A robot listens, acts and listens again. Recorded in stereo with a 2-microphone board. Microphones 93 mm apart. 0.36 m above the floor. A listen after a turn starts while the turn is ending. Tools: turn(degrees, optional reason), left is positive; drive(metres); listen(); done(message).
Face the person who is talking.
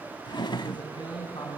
turn(degrees=55, reason="The man speaking: about 55° left or 125° left.")
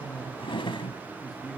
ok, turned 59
done("Found it: a man speaking, straight ahead.")